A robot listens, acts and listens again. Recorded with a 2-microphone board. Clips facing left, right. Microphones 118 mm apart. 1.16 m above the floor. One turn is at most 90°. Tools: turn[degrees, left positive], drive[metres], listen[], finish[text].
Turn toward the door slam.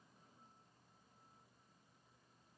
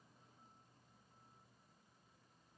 Action: listen[]
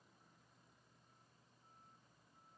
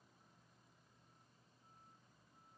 Action: listen[]
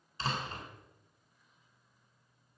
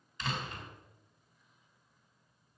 Thought: The door slam: about 30° left or 150° left.
Action: turn[30]
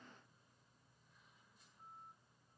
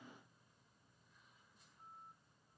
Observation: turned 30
Action: listen[]
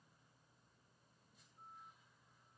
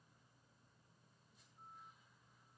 Action: finish[I heard a door slam, but can't make it out now. It was about straight ahead or 120° left.]